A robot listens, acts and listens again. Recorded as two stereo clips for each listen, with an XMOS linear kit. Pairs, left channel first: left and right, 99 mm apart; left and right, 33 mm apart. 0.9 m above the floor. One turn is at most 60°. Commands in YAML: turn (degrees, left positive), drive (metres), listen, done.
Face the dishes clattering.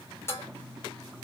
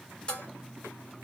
turn: 25
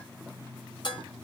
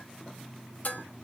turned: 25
turn: 60
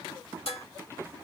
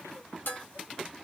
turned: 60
turn: 60
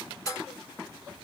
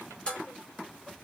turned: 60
turn: 35
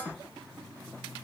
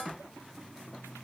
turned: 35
turn: 15
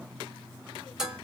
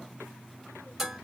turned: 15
done: "Facing the dishes clattering."